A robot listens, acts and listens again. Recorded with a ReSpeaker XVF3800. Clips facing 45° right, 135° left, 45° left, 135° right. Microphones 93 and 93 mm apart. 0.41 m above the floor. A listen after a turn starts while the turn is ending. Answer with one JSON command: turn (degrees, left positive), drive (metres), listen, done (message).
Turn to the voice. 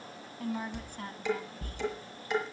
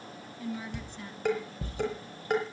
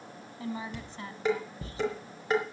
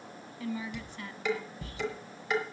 {"turn": -10}
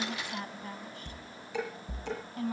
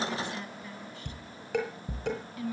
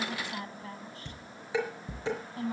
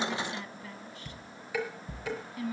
{"done": "Found it: a woman speaking, straight ahead, 2 to 4 m away."}